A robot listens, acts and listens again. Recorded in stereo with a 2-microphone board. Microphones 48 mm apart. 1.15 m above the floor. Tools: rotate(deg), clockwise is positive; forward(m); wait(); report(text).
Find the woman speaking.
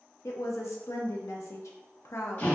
rotate(-90)
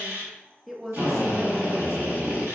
rotate(10)
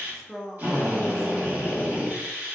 report("Facing the woman speaking.")